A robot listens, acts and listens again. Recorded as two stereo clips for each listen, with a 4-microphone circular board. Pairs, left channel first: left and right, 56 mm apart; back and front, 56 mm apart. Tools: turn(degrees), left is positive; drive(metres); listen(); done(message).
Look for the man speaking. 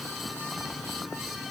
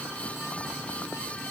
listen()
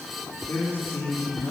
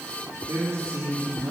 turn(degrees=40)
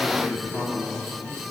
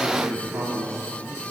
done("Facing the man speaking, 2 to 4 m away.")